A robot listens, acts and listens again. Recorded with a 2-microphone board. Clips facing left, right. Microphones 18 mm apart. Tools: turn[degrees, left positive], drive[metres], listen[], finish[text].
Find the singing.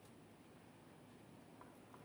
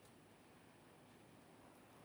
Action: listen[]
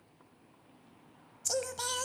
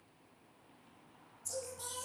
Thought: The singing: about 65° left or 115° left.
Action: turn[65]
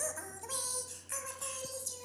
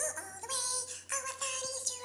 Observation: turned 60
Thought: So it is at 30° right.
Action: turn[-30]
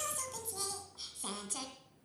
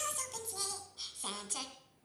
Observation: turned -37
Action: finish[Found it: singing, straight ahead, 2 to 4 m away.]